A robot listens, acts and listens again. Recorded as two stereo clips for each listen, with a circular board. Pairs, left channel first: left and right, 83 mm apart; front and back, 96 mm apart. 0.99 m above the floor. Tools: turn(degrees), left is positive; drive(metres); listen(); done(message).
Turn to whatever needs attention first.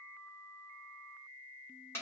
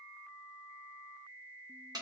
listen()
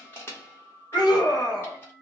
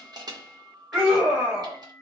turn(degrees=105)
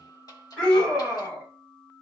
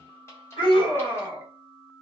turn(degrees=15)
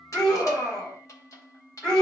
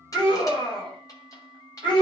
done("Found it: a scream, straight ahead.")